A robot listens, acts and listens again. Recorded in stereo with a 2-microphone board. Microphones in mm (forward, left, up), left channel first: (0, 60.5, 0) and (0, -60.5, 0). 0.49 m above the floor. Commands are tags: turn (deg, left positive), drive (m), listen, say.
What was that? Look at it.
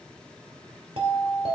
<turn deg="-55"/>
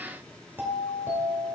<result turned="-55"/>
<turn deg="-20"/>
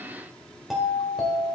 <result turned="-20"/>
<say>Found it: a doorbell, straight ahead.</say>